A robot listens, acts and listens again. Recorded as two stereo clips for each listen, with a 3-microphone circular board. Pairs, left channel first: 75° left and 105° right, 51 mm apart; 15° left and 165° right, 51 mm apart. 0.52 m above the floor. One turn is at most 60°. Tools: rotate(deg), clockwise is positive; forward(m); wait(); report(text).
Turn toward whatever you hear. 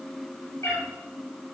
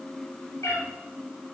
rotate(-45)
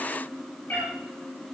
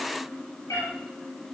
rotate(-15)
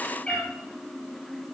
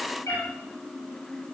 report("Facing the cat meowing.")